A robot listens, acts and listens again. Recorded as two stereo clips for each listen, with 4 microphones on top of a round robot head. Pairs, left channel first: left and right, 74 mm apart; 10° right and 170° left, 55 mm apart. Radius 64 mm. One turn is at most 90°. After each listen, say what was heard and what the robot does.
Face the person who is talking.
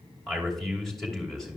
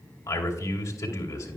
Facing the man speaking, 2 to 4 m away.